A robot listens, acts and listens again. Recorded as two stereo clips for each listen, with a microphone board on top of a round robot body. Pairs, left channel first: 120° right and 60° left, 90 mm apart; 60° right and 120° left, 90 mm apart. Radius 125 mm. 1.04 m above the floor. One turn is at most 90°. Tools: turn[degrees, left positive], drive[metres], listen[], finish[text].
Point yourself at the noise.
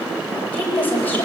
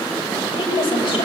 Thought: The woman speaking: 50° right.
Action: turn[-50]
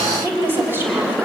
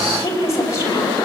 Action: finish[Found it: a woman speaking, straight ahead, over 4 m away.]